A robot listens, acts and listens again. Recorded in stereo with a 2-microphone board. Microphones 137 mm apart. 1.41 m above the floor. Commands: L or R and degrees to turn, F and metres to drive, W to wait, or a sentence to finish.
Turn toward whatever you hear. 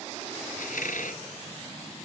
L90
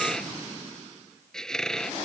Facing the squeak.